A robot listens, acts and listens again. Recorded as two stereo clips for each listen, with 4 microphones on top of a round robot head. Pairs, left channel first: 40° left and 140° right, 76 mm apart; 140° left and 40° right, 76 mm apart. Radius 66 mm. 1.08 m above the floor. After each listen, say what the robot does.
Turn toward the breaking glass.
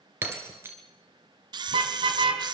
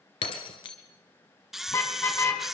Turn 160° left.
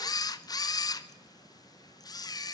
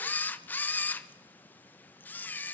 Facing where the breaking glass came from. I can't hear it now.